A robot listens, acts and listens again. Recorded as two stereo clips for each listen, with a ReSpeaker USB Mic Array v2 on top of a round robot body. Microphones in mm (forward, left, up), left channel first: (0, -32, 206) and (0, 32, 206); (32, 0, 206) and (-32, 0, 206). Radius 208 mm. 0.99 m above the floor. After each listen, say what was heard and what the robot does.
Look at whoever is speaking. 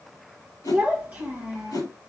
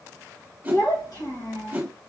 The child speaking: 20° left. Turn 20° left.
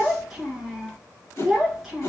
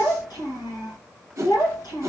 Found it: a child speaking, straight ahead.